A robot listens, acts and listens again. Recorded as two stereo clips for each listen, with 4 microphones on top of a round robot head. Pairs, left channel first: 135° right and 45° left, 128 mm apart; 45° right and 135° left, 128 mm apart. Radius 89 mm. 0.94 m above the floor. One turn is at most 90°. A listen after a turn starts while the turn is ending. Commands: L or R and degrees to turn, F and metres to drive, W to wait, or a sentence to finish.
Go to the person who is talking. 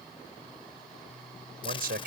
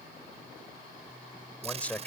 L35
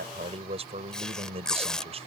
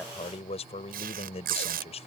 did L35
F1.0
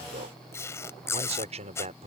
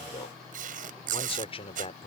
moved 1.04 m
F1.0
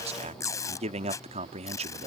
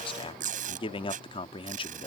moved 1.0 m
F1.0
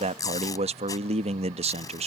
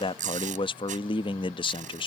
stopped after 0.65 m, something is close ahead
I am next to the man speaking.